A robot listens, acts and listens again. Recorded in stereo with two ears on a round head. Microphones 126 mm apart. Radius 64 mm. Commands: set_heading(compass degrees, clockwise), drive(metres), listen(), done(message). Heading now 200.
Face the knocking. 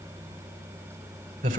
listen()
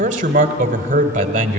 listen()
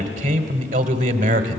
done("I can't make out knocking, only a man speaking.")